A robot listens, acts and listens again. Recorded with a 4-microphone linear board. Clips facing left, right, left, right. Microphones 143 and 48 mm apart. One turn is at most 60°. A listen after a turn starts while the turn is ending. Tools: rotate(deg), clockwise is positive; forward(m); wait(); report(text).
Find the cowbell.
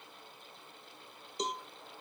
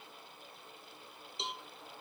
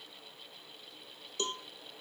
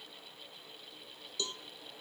rotate(-40)
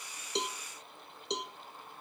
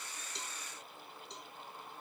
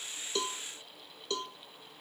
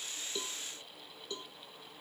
rotate(-60)
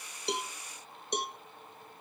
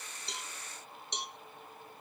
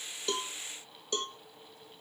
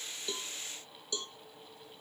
rotate(-50)
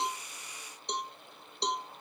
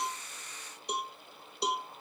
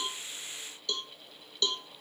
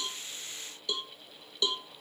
report("Facing the cowbell.")